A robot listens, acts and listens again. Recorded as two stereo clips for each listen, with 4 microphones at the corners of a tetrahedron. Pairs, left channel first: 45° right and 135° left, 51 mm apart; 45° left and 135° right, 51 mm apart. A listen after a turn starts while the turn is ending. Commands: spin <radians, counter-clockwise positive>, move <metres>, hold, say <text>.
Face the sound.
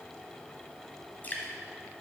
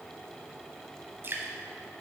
spin -1.66
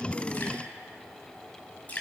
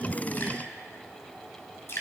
spin 0.17
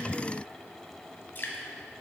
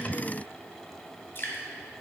say Found it: dripping, straight ahead.